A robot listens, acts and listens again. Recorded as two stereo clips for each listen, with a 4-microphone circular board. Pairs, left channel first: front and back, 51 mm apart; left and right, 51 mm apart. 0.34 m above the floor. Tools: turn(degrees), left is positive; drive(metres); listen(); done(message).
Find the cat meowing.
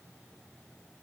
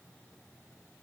listen()
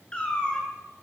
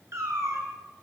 turn(degrees=-70)
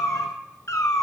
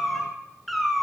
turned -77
done("Found it: a cat meowing, straight ahead, 2 to 4 m away.")